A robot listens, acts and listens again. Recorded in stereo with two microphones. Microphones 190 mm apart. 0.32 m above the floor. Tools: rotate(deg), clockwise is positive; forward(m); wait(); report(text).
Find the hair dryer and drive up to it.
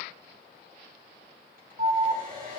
rotate(50)
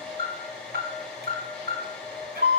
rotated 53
forward(1.0)
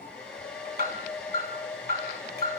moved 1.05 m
forward(1.0)
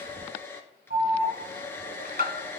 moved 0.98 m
rotate(-15)
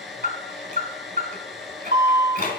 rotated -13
forward(1.0)
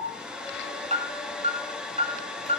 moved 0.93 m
forward(1.0)
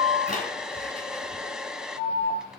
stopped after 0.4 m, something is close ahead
report("I am next to the hair dryer.")